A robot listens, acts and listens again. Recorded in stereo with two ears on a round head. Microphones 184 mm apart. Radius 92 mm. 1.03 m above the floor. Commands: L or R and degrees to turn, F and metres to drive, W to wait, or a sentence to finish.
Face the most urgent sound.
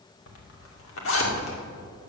W
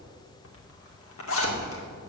W
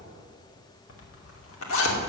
I can't make out anything urgent, only a zipper.